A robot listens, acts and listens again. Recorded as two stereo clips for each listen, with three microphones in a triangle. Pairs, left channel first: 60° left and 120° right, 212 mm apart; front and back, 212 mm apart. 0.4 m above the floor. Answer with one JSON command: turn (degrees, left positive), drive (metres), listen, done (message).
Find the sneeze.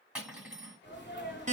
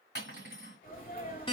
{"turn": 40}
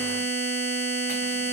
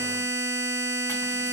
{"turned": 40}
{"done": "Facing where the sneeze came from. I can't hear it now."}